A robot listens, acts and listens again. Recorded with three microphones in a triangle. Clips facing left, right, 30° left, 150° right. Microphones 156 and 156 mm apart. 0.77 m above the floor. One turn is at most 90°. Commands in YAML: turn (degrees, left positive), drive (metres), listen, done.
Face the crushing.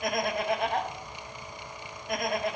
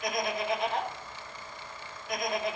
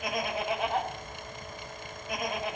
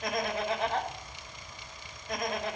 listen: true
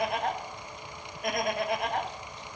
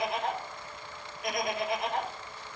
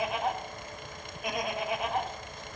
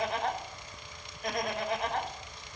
listen: true
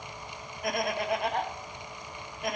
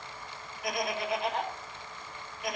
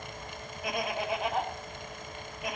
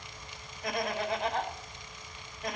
done: "I can't make out crushing to turn to."